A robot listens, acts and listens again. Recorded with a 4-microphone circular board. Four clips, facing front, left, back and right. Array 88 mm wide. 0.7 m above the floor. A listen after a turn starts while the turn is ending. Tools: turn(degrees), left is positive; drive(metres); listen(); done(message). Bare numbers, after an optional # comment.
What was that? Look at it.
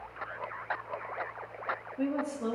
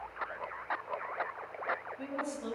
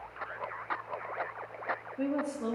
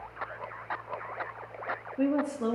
# The woman speaking: 85° right.
turn(-85)
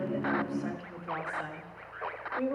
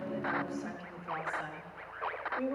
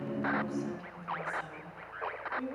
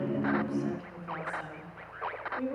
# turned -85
# The woman speaking is now 15° left.
turn(15)
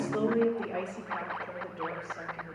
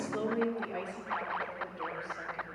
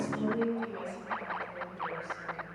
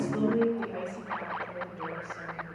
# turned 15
done("Facing the woman speaking, 2 to 4 m away.")